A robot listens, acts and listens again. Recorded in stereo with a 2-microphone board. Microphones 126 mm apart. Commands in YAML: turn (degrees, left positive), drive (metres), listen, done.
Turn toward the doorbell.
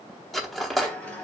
listen: true
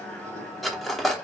listen: true
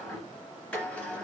done: "I can't make out a doorbell, only a sliding door and cutlery clinking."